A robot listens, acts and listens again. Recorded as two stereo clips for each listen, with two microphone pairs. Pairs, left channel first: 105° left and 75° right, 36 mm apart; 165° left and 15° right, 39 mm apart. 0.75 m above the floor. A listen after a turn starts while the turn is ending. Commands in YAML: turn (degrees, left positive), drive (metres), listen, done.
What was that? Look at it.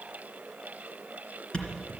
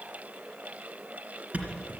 turn: 40
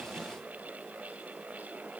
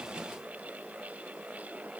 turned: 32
turn: 10
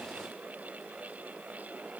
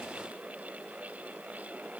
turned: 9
done: "I heard a thud from this way, but can't make it out now."